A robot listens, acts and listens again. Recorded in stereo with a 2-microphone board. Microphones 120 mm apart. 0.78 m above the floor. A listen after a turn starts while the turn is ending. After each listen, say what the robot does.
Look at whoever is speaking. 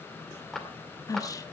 Turn 30° left.
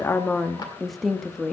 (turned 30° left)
Facing the woman speaking, 1 to 2 m away.